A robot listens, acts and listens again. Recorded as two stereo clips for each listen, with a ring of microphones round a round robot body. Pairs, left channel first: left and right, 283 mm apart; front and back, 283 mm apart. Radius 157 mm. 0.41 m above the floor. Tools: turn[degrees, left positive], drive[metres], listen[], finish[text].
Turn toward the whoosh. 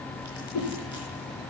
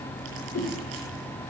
Thought: The whoosh: 50° left.
Action: turn[50]
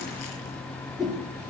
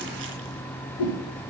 Action: finish[Found it: a whoosh, straight ahead, over 4 m away.]